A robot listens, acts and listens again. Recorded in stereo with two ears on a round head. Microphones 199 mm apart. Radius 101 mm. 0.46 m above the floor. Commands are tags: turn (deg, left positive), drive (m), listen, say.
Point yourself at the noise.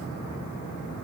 <listen/>
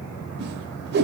<turn deg="-45"/>
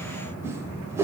<turn deg="-15"/>
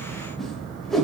<say>Facing the whoosh, 1 to 2 m away.</say>